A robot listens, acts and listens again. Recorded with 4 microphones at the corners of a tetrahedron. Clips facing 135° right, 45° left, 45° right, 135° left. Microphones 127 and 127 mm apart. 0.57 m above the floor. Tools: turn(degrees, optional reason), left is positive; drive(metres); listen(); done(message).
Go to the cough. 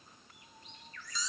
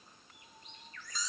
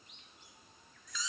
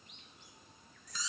listen()
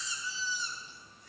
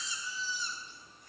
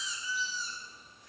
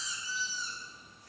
listen()
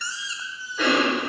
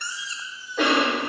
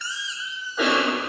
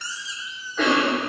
turn(degrees=35, reason="The cough: 35° left.")
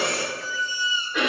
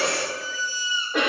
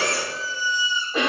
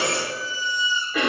turn(degrees=10, reason="The cough is now 10° left.")
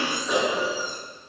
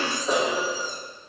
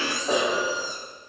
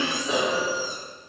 drive(metres=1.0)
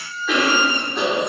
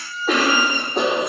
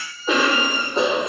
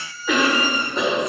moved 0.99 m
turn(degrees=10, reason="The cough is now 10° left.")
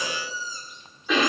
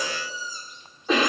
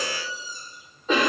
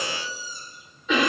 drive(metres=1.0)
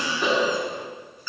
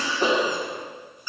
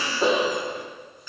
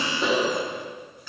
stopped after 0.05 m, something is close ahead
done("I am next to the cough.")